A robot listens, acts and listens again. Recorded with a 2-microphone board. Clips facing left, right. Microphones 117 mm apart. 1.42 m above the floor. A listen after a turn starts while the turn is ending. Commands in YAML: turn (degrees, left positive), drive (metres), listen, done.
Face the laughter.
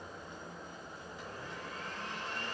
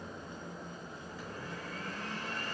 listen: true
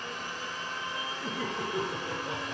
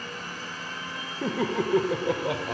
turn: -90
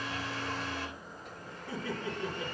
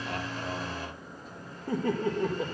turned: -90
turn: -50
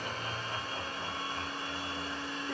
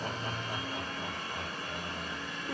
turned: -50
turn: -10
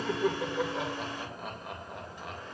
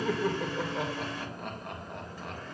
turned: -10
done: "Found it: laughter, straight ahead."